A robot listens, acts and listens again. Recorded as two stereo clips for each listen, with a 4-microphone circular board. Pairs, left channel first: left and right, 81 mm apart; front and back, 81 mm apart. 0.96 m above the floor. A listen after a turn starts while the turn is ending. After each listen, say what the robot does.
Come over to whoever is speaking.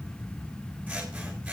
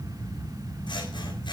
Keep listening.
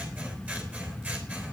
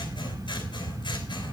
Keep listening.
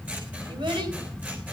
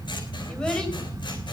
Turn 80° right.
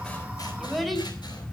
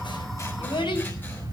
Drive 1.0 m forward.
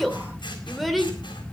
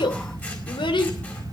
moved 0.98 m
Drive 1.0 m forward.
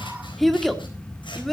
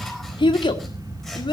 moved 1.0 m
Drive 1.0 m forward.
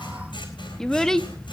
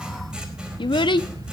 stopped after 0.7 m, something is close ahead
Turn 10° left.
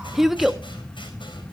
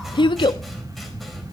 Arrived at the child speaking, straight ahead.